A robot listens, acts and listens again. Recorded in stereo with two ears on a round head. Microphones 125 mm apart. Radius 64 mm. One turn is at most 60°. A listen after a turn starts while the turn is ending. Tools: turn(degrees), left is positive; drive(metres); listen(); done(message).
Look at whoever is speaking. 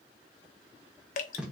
listen()
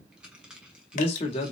turn(degrees=40)
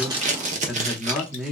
done("Found it: a man speaking, straight ahead.")